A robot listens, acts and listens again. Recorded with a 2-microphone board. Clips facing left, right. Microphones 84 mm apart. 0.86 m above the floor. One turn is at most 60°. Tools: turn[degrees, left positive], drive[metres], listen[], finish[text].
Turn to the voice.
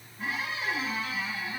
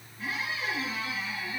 Action: listen[]
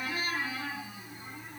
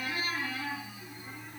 Action: listen[]
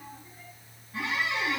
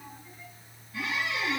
Action: finish[I can't make out anyone speaking, only a squeak.]